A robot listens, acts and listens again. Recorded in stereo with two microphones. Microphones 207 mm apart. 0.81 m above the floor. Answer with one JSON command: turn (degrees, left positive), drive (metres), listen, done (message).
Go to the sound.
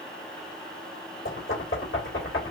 {"turn": 90}
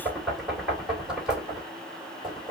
{"drive": 1.0}
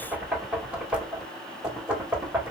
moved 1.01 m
{"drive": 1.0}
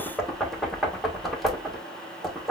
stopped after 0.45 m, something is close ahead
{"done": "I am next to the knocking."}